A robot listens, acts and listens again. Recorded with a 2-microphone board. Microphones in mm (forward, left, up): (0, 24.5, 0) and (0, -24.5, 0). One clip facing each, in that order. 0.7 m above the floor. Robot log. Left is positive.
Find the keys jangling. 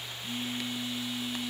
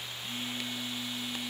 cmd idle
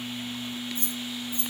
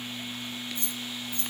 note: The keys jangling: about 25° left or 155° left.
cmd yaw +25
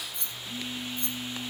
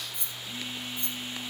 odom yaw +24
note: So it is at 10° right.
cmd yaw -10
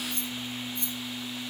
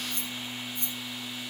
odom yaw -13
note: The keys jangling is now 10° right.
cmd yaw -10
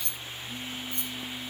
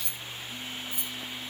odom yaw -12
end: Facing the keys jangling, 2 to 4 m away.